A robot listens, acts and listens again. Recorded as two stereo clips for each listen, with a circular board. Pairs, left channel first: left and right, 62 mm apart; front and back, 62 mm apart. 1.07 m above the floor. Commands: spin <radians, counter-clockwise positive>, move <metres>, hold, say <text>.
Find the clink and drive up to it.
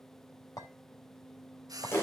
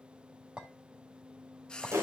spin 1.83
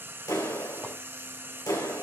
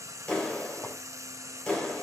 hold
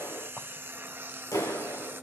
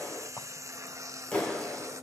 hold
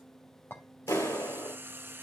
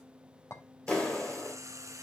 spin 0.61
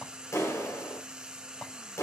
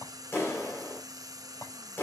spin 0.26
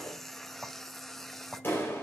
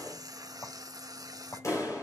move 1.0
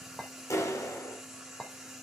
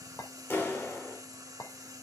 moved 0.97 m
spin 0.17
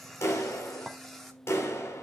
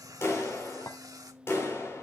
move 1.0
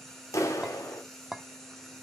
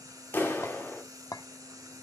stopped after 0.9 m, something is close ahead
say Arrived at the clink, straight ahead.